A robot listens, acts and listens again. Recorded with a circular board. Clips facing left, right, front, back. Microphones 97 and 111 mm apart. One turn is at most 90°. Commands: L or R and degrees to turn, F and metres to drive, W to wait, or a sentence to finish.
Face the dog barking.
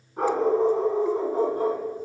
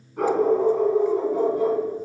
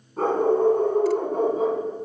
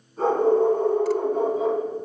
L45
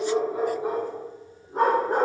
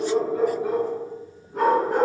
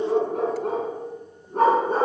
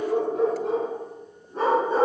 L35
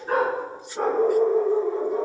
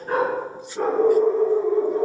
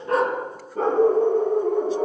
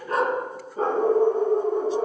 L20
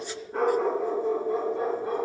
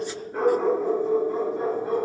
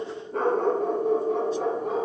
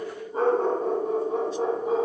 Found it: a dog barking, straight ahead, 2 to 4 m away.